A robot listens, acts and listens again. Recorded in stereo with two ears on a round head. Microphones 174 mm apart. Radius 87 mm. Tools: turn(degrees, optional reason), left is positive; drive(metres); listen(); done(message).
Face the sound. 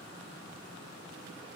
listen()
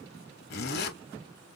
turn(degrees=50, reason="The zipper: about 50° left or 130° left.")
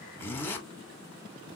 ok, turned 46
turn(degrees=10, reason="So it is at 10° left.")
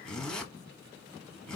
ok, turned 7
done("Facing the zipper.")